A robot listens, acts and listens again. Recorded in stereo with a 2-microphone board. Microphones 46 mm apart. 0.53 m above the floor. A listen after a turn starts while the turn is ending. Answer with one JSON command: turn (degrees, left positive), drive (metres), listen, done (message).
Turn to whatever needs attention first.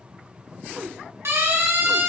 {"turn": -75}
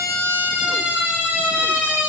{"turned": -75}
{"turn": -30}
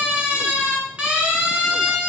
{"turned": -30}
{"turn": -25}
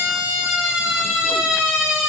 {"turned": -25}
{"turn": -15}
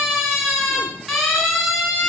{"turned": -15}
{"done": "Found it: a siren, straight ahead, over 4 m away."}